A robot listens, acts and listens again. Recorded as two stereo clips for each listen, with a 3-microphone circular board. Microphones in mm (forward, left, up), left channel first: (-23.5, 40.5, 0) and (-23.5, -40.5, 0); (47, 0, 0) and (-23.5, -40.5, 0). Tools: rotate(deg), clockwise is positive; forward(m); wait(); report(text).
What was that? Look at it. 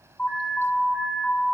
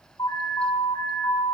rotate(-25)
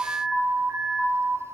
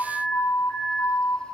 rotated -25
report("Facing the alarm, over 4 m away.")